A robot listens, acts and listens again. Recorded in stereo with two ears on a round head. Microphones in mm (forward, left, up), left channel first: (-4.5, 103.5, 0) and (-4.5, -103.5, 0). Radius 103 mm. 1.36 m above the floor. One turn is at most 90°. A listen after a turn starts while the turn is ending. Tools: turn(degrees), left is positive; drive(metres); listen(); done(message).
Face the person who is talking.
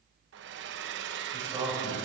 turn(degrees=-30)
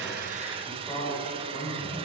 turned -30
turn(degrees=10)
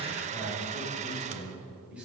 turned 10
done("Found it: a man speaking, straight ahead, over 4 m away.")